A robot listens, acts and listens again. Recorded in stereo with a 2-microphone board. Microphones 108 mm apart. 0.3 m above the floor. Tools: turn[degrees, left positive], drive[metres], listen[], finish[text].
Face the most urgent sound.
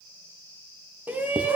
Thought: The shout: about 15° right or 165° right.
Action: turn[-15]
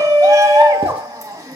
Thought: So it is at 150° right.
Action: turn[-150]
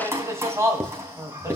Thought: The shout is now 30° right.
Action: turn[-30]
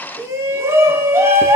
Thought: The shout is now 30° right.
Action: turn[-30]
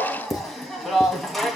Action: finish[Facing the shout, 2 to 4 m away.]